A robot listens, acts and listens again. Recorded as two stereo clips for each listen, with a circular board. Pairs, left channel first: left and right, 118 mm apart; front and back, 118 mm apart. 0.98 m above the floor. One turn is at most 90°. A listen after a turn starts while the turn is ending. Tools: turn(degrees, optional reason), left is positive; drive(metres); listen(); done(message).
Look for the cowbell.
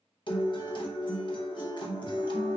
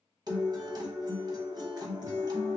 listen()
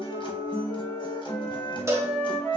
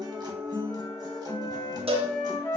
turn(degrees=-90, reason="The cowbell: 155° right.")
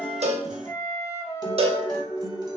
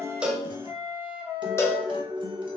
turn(degrees=-65, reason="The cowbell is now 65° right.")
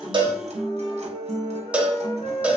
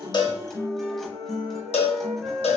turn(degrees=-10, reason="The cowbell is now 10° right.")
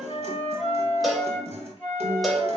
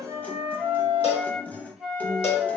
done("Facing the cowbell, under 1 m away.")